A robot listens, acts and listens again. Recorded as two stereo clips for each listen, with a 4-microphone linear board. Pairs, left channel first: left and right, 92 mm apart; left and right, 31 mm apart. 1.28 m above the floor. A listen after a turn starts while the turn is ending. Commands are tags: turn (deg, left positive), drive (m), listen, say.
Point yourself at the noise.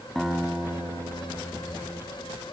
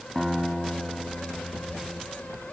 <turn deg="30"/>
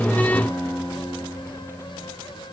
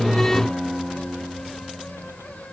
<turn deg="150"/>
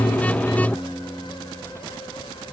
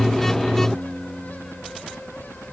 <turn deg="35"/>
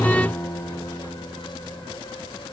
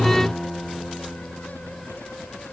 <turn deg="30"/>
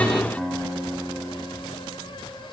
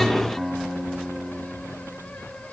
<say>Found it: a guitar, straight ahead.</say>